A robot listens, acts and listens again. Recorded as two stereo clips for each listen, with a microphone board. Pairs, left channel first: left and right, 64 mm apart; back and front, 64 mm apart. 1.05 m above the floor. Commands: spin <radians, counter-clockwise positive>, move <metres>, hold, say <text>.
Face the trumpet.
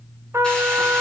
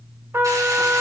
spin -0.87
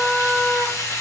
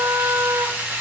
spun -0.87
say Found it: a trumpet, straight ahead.